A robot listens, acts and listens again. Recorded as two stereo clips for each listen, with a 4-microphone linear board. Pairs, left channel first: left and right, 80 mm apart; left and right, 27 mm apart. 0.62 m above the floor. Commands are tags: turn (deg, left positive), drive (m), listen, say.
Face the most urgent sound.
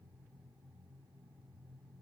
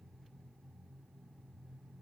<listen/>
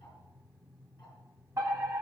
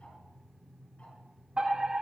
<turn deg="-35"/>
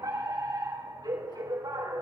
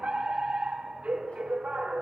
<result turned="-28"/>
<turn deg="-115"/>
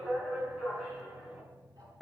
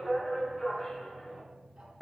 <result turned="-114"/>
<say>Found it: a fire alarm, straight ahead, over 4 m away.</say>